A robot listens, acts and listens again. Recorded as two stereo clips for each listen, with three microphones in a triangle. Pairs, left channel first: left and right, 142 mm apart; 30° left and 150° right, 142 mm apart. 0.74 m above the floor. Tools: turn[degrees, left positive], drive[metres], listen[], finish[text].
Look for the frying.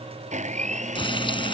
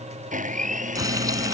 Thought: The frying: 145° left.
Action: turn[145]
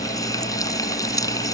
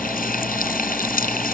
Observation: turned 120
Thought: The frying is now 25° left.
Action: turn[25]
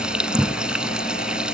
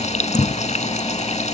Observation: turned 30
Action: finish[Found it: frying, straight ahead.]